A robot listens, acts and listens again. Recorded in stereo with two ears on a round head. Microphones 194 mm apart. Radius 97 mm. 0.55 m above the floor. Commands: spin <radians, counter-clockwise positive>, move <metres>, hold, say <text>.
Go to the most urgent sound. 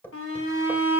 spin 1.13
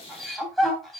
move 1.0
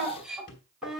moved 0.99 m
move 1.0
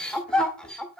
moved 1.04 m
move 1.0
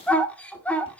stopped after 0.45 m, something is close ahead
spin 0.17
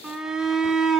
say Arrived at the shout, straight ahead.